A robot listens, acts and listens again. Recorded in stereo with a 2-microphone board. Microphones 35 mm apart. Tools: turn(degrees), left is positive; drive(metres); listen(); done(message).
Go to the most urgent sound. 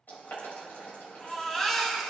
turn(degrees=30)
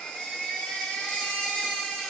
turn(degrees=140)
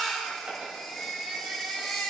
drive(metres=1.0)
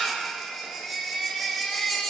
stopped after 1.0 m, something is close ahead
done("I am next to the baby crying.")